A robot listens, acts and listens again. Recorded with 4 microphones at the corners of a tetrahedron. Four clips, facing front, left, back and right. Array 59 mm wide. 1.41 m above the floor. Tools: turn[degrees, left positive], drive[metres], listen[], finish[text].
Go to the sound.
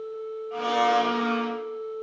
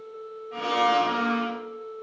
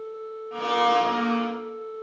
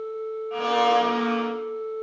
Thought: The blender: 80° right.
Action: turn[-80]
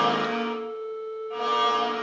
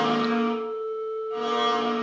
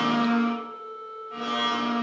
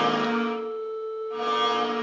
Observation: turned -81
Action: drive[1.0]
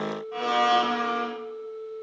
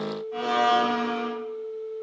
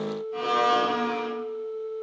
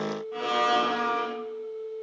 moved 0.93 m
Action: drive[1.0]
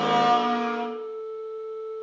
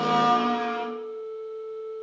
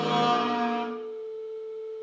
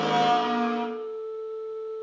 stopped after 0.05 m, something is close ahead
Action: finish[Arrived at the blender, straight ahead.]